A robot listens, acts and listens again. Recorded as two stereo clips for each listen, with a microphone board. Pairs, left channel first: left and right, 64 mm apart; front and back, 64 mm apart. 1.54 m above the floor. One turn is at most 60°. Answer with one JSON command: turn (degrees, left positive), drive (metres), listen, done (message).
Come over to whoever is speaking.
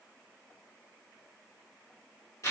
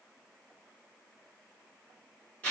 {"listen": true}
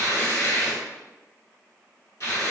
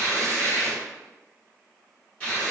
{"listen": true}
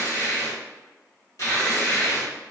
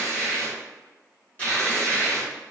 {"done": "I can't make out anyone speaking to turn to."}